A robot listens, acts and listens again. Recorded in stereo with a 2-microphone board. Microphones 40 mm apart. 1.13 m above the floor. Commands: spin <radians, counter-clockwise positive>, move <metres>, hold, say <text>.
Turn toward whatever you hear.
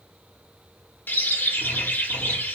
spin 0.96
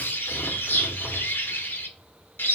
spin 1.22
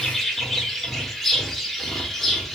say Facing the bird, under 1 m away.